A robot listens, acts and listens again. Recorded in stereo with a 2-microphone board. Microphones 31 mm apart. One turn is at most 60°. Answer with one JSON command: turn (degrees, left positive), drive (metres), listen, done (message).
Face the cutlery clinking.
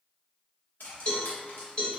{"turn": 60}
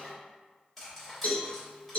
{"turn": 10}
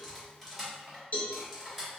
{"done": "Facing the cutlery clinking."}